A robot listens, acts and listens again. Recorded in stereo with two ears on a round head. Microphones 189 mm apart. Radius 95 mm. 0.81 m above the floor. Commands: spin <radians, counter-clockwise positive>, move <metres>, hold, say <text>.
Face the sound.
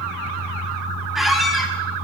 spin 0.52
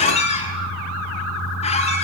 spin 2.62
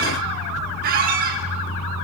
spin -0.79
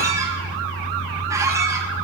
spin -0.26
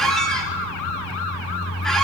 say Facing the squeak.